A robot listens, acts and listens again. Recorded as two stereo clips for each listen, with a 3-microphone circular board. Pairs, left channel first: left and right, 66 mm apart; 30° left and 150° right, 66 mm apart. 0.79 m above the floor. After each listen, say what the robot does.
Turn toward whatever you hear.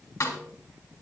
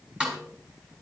Turn 135° left.
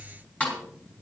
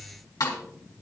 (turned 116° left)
Turn 20° left.
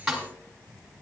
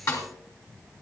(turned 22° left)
Found it: a snare drum, straight ahead.